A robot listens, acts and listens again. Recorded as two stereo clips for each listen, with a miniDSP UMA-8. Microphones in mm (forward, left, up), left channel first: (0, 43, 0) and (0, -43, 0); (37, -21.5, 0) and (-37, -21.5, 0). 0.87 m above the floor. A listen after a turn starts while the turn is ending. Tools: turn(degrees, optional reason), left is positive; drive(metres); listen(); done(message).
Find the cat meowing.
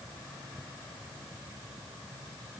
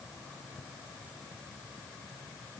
listen()
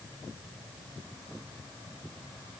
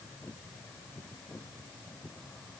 listen()
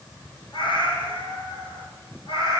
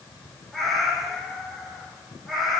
turn(degrees=90, reason="The cat meowing: 90° left.")
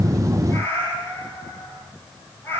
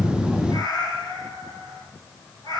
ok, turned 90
turn(degrees=25, reason="The cat meowing is now 25° left.")
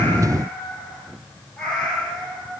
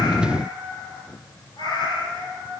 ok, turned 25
turn(degrees=10, reason="The cat meowing is now 10° left.")
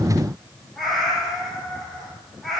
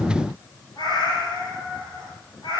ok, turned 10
done("Facing the cat meowing, 2 to 4 m away.")